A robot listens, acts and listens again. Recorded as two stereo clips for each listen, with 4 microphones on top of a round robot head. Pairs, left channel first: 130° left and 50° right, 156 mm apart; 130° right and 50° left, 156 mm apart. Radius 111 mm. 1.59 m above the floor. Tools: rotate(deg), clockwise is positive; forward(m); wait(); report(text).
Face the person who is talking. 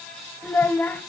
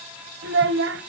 rotate(-50)
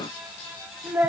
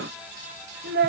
rotate(-30)
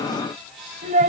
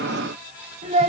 report("Found it: a child speaking, straight ahead, under 1 m away.")